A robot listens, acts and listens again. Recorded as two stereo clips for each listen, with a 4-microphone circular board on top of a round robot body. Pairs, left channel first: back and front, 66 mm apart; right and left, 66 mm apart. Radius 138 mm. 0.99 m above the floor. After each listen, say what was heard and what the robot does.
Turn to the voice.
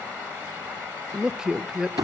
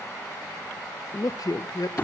The woman speaking: 80° right. Turn 80° right.
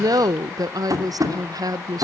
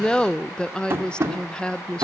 The woman speaking is now 15° right. Turn 15° right.
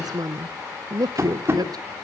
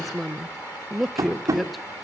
Found it: a woman speaking, straight ahead.